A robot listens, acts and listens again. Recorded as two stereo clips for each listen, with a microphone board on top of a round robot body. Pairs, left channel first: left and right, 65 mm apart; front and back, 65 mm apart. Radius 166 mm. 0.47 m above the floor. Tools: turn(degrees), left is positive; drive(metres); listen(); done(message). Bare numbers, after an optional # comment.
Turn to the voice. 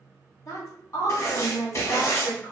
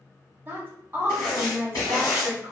# The woman speaking: 125° left.
turn(125)
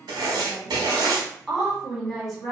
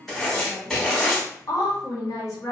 done("Found it: a woman speaking, straight ahead.")